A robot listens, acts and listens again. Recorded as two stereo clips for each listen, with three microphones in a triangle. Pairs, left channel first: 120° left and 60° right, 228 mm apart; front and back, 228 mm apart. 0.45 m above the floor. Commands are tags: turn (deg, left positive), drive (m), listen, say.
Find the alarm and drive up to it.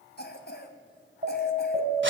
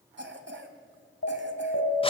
<turn deg="-15"/>
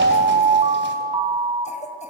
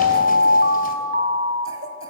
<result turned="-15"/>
<drive m="1.0"/>
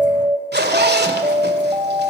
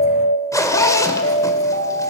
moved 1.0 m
<drive m="1.0"/>
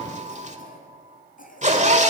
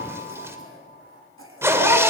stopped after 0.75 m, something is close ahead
<listen/>
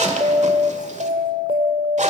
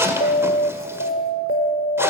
<say>Arrived at the alarm, straight ahead.</say>